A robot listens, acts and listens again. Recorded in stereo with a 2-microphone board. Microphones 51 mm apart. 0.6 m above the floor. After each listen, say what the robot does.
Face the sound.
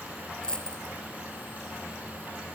Turn 15° left.
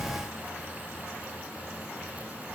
Keep listening.
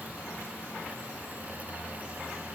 I heard a dropped coin, but can't make it out now. It was about straight ahead or 150° left.